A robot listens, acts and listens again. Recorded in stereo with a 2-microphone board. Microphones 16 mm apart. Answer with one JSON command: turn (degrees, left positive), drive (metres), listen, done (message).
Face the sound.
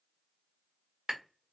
{"turn": -60}
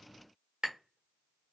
{"turn": -55}
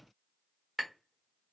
{"turn": -15}
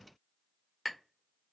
{"done": "Facing the tapping, 1 to 2 m away."}